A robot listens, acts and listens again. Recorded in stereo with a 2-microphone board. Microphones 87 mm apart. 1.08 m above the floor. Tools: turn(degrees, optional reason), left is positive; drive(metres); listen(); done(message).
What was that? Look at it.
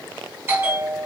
turn(degrees=-25, reason="The bell: about 25° right or 155° right.")
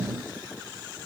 listen()
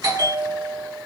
turn(degrees=-125, reason="So it is at 125° right.")
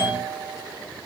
turn(degrees=-25, reason="The bell is now 25° right.")
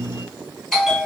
turn(degrees=10, reason="The bell is now 10° left.")
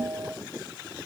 done("Found it: a bell, straight ahead, 1 to 2 m away.")